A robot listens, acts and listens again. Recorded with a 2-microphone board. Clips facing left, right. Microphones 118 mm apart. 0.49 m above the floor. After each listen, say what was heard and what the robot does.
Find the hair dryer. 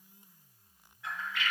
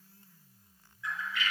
Keep listening.
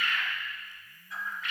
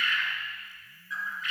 Keep listening.
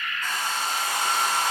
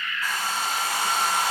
Turn 30° right.
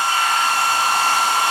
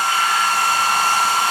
So it is at 20° left. Turn 20° left.
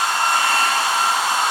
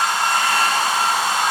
Facing the hair dryer, 2 to 4 m away.